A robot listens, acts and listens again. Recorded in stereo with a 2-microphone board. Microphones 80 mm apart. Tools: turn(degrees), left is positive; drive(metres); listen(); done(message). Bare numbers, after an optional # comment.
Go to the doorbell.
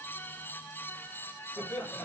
listen()
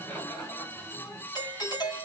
# The doorbell: about 60° left or 120° left.
turn(60)
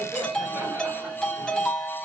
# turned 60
# So it is at 10° left.
turn(10)
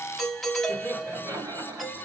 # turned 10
drive(1.0)
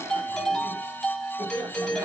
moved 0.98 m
# The doorbell is now 10° left.
turn(10)
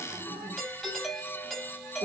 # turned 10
drive(1.0)
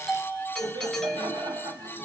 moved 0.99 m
drive(1.0)
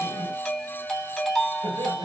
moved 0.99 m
drive(1.0)
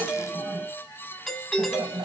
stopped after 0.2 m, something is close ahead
done("Arrived at the doorbell, straight ahead.")